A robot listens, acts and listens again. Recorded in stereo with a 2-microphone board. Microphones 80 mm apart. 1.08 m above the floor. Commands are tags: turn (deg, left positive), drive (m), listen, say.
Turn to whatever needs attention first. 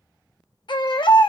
<turn deg="70"/>
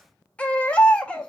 <turn deg="15"/>
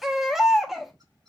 <say>Found it: a baby crying, straight ahead.</say>